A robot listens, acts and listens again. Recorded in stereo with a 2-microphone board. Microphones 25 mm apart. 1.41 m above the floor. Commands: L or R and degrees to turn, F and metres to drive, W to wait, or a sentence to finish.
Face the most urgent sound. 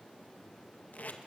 W
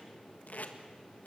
W
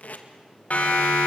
L65
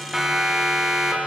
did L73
R10
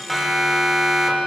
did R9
Found it: a siren, straight ahead.